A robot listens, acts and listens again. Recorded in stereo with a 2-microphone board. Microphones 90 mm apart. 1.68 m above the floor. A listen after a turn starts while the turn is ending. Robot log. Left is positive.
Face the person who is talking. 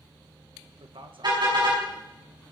cmd yaw -90
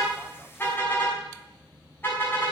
cmd idle
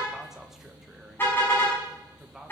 end: Found it: a man speaking, straight ahead, 1 to 2 m away.